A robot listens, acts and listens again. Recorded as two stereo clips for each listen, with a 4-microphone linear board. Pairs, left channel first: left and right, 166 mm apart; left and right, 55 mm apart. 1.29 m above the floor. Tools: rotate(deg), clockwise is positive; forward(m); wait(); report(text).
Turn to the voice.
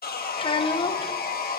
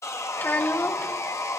rotate(-30)
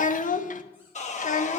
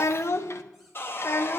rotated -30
rotate(-115)
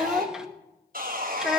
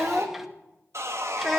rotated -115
report("Found it: a child speaking, straight ahead.")